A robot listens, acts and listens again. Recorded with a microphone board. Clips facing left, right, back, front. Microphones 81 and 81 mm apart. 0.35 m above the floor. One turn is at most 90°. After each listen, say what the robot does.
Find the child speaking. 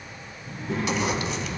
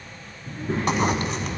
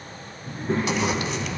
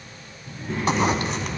Turn 90° right.
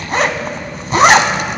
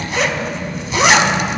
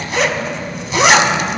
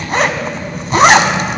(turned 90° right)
Turn 45° right.
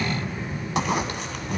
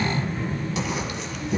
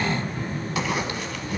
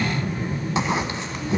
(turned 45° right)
Turn 30° right.
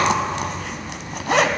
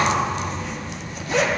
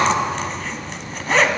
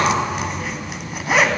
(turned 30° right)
Turn 10° right.
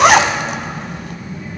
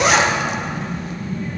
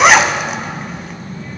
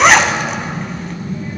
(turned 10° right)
Facing the child speaking.